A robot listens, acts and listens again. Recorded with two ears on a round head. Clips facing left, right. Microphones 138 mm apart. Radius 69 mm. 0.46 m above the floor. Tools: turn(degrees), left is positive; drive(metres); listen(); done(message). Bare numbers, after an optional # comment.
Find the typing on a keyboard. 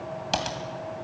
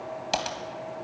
turn(-30)
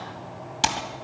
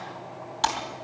# So it is at 25° left.
turn(25)
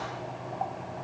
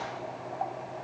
listen()
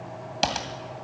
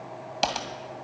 done("Found it: typing on a keyboard, straight ahead.")